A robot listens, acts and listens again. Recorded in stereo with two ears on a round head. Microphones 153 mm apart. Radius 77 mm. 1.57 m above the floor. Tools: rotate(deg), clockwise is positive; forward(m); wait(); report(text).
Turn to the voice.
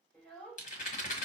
rotate(-30)
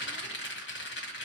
wait()
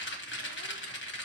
wait()
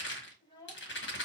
rotate(-155)
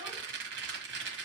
wait()
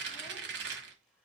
wait()
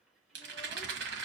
report("I heard a child speaking from this way, but can't make it out now.")